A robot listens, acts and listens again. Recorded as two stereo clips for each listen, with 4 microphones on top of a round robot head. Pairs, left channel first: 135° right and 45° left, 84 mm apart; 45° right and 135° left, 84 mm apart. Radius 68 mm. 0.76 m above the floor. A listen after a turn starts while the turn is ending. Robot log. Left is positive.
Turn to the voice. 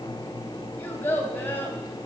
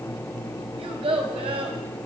note: The child speaking: 155° left.
cmd yaw +155
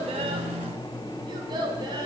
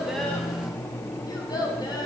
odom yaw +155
end: Facing the child speaking.